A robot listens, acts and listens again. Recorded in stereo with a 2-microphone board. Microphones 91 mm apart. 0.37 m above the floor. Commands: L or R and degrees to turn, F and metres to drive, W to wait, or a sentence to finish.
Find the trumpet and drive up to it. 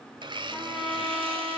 L30
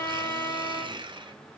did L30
L150
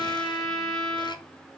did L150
L10
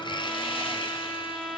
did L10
F1.0
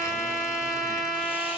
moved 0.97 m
F1.0
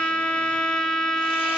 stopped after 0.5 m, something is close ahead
L10
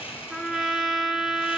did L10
Arrived at the trumpet, straight ahead.